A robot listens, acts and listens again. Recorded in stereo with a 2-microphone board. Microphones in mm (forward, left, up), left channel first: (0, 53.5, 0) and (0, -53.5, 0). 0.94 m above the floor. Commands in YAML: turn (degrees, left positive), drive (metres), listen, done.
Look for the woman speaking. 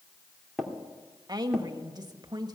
turn: -40
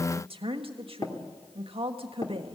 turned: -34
turn: -100
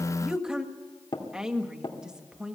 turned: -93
turn: -10
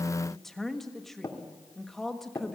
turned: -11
done: "Found it: a woman speaking, straight ahead."